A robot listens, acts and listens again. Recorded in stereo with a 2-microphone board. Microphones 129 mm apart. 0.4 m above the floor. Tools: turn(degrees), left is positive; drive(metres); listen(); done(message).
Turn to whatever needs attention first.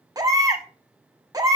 turn(degrees=-30)
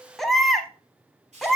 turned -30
done("Found it: a baby crying, straight ahead.")